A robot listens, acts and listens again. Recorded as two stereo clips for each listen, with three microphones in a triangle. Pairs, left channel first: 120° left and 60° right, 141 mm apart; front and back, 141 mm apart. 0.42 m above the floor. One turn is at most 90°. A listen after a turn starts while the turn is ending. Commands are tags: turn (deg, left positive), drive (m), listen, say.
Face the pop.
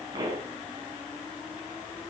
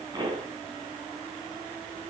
<turn deg="-90"/>
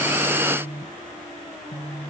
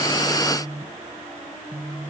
<turn deg="-30"/>
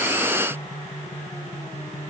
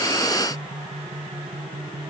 <say>Facing where the pop came from. I can't hear it now.</say>